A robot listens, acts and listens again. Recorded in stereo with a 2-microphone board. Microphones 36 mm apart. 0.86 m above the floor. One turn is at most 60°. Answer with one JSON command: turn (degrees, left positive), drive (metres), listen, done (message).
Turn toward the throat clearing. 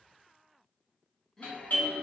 {"turn": 15}
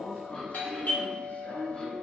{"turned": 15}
{"turn": 60}
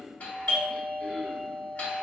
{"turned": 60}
{"turn": 60}
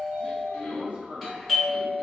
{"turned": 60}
{"turn": 60}
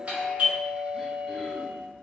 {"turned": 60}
{"listen": true}
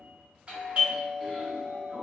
{"listen": true}
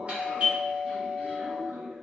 {"done": "Facing where the throat clearing came from. I can't hear it now."}